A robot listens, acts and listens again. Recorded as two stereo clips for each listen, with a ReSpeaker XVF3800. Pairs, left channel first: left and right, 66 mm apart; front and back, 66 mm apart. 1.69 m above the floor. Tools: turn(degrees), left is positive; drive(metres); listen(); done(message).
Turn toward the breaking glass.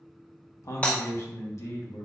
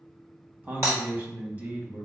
turn(degrees=155)
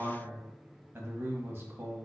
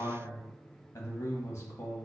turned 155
done("Facing where the breaking glass came from. I can't hear it now.")